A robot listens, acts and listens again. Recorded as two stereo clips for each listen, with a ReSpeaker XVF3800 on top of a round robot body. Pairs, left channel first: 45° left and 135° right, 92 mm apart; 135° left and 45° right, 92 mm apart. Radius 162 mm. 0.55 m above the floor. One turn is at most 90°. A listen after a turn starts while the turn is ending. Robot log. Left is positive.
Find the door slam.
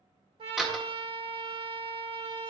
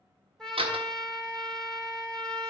note: The door slam: 50° right.
cmd yaw -50
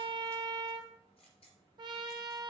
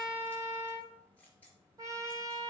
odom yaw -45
end: I heard a door slam from this way, but can't make it out now.